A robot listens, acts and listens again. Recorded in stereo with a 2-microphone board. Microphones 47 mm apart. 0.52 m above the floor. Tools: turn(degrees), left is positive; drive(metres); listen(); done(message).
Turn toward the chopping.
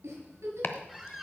turn(degrees=50)
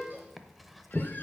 done("Found it: chopping, straight ahead.")